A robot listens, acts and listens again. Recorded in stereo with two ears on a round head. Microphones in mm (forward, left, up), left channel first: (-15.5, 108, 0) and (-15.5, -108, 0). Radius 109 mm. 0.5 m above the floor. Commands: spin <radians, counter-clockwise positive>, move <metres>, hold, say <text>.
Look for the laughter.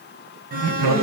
spin -1.13
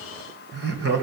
spin -0.79
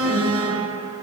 hold
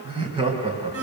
spin -0.35
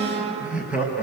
say Facing the laughter.